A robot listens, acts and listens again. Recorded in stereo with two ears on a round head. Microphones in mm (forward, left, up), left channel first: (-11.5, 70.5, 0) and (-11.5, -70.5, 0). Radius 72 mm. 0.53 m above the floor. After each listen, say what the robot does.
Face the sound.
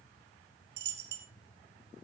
Turn 90° right.
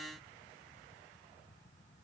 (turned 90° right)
I heard a dropped coin from this way, but can't make it out now.